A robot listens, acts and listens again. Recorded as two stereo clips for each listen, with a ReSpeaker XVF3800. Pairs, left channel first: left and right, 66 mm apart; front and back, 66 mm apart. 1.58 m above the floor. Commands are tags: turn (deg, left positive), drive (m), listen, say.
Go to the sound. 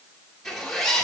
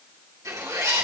<turn deg="175"/>
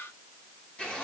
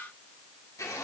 <turn deg="25"/>
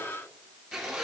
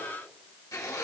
<drive m="1.0"/>
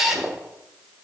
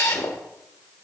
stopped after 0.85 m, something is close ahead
<say>I am next to the zipper.</say>